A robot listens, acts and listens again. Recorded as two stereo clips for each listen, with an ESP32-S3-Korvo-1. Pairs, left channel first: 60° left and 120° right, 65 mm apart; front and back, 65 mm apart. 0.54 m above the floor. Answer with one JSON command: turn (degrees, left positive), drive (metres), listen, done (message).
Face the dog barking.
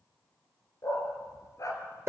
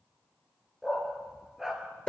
{"turn": 95}
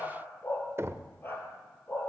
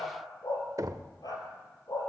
{"done": "Facing the dog barking."}